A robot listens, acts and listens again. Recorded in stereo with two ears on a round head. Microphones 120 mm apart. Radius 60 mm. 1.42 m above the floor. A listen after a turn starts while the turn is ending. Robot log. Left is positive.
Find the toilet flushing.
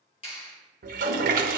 note: The toilet flushing: about 70° right or 110° right.
cmd yaw -70
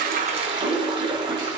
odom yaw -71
note: So it is at 35° right.
cmd yaw -35
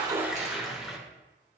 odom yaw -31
end: Found it: a toilet flushing, straight ahead.